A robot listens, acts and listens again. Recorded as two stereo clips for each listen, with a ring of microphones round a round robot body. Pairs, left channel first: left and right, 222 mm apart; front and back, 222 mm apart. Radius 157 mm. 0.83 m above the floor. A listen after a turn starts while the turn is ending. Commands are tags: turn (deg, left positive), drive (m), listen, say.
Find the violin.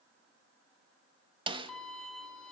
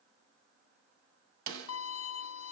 <say>Facing the violin, under 1 m away.</say>